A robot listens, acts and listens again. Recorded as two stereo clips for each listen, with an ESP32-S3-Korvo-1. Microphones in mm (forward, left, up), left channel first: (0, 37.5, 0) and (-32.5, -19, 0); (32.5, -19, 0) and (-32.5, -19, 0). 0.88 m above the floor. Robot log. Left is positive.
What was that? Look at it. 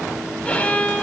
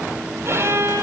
note: The violin: 130° left.
cmd yaw +130
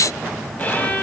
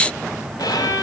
end: Facing the violin, 2 to 4 m away.